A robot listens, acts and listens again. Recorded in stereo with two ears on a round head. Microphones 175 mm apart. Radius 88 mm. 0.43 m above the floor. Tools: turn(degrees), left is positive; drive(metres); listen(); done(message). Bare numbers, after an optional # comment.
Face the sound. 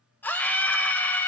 turn(30)
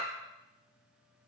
listen()
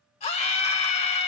# So it is at 140° left.
turn(140)
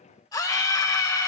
# The scream is now 20° left.
turn(20)
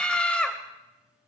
done("Facing the scream, 1 to 2 m away.")